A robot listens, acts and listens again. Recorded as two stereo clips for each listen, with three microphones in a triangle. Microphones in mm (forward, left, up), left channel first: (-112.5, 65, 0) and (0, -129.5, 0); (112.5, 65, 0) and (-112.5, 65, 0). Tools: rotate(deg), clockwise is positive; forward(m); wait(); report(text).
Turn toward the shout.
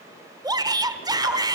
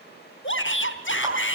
rotate(-10)
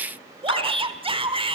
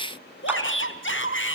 report("Facing the shout, 1 to 2 m away.")